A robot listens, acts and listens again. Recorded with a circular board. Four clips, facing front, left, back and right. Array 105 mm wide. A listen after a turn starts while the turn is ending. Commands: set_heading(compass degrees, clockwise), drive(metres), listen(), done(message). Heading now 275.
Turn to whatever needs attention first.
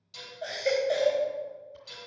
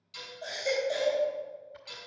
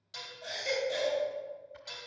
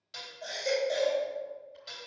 set_heading(285)
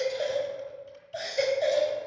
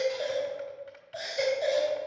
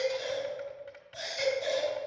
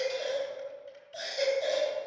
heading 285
done("Facing the baby crying.")